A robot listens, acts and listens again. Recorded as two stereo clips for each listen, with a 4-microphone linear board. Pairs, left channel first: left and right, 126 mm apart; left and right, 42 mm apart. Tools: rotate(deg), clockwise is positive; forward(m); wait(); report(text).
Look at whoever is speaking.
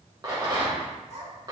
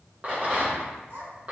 rotate(60)
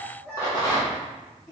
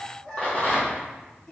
rotate(-30)
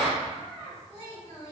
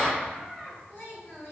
rotate(-25)
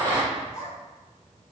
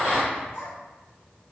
rotate(-20)
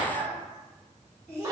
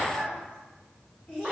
rotate(-15)
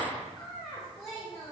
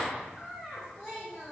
report("Found it: a child speaking, straight ahead, 1 to 2 m away.")